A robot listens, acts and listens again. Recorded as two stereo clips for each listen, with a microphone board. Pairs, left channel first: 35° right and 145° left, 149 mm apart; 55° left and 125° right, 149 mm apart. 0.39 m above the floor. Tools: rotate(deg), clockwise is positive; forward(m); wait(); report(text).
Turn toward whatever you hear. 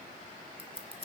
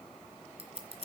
rotate(170)
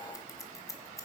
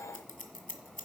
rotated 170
rotate(-35)
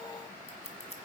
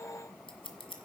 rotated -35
report("Facing the scissors, 1 to 2 m away.")